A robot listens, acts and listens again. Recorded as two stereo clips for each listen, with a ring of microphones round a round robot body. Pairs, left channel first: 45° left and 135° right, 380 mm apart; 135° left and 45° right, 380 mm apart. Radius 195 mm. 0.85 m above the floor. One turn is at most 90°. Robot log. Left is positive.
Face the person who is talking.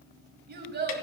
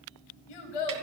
note: The child speaking: 160° left.
cmd yaw +90
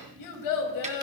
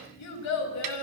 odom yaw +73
note: The child speaking is now 85° left.
cmd yaw +85
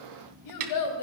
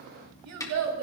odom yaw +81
end: Facing the child speaking.